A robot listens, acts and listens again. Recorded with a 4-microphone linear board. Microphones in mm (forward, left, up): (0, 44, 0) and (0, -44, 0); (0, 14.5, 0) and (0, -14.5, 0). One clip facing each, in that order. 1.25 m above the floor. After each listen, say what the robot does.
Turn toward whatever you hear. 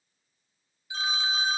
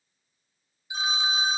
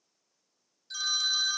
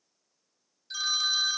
Turn 20° right.
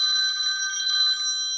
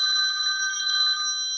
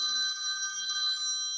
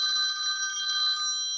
Turn 140° right.
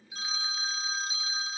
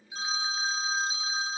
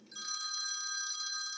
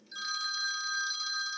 Turn 30° right.
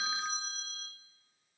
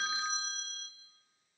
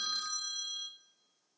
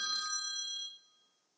Facing the phone ringing.